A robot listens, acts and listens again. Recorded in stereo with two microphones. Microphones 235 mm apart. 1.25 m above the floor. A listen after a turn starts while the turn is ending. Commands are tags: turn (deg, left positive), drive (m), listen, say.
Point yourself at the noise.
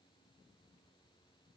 <listen/>
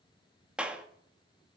<turn deg="-30"/>
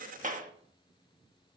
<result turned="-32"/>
<turn deg="-145"/>
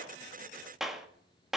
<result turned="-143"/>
<say>Facing the clap, 1 to 2 m away.</say>